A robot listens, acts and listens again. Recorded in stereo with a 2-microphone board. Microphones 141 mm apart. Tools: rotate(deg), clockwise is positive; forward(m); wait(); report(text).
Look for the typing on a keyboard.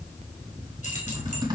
rotate(30)
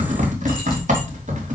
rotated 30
rotate(115)
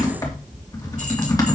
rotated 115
rotate(-25)
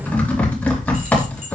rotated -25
rotate(-10)
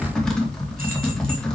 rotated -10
report("Facing the typing on a keyboard.")